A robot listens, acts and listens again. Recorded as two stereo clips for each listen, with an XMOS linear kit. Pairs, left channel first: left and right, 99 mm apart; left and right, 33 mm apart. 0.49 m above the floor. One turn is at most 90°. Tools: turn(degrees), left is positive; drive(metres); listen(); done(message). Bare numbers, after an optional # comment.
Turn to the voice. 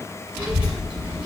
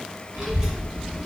turn(-30)
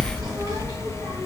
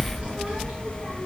# So it is at 135° right.
turn(-90)
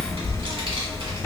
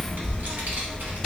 # The child speaking is now 70° right.
turn(-70)
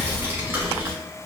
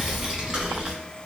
# The child speaking is now 25° right.
turn(-25)
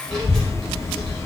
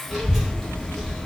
done("Found it: a child speaking, straight ahead, 1 to 2 m away.")